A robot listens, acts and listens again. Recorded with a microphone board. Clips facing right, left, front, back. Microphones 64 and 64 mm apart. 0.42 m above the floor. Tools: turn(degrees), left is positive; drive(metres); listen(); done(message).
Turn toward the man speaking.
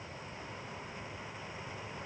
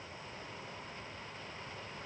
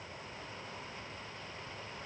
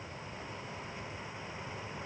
listen()
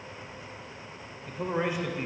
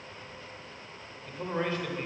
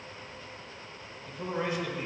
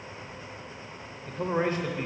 turn(degrees=-155)
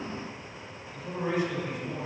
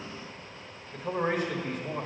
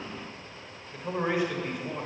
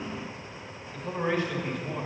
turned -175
turn(degrees=75)
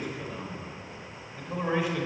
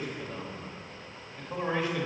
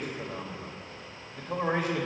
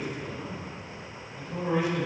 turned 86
turn(degrees=-10)
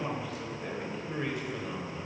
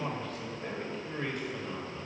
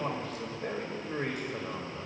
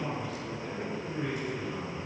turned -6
done("Found it: a man speaking, straight ahead.")